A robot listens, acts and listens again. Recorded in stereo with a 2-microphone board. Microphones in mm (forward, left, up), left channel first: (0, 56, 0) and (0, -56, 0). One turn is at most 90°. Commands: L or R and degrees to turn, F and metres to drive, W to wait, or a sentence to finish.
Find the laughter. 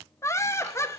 L25
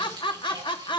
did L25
L90
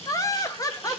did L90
L35
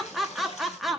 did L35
Facing the laughter.